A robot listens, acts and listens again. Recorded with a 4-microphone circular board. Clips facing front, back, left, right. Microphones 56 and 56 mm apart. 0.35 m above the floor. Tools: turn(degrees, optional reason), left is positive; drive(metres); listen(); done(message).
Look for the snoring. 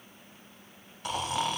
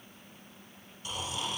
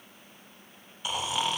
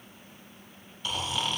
turn(degrees=10, reason="The snoring: 10° left.")
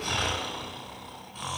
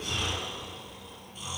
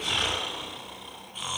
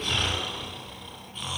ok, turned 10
done("Found it: snoring, straight ahead.")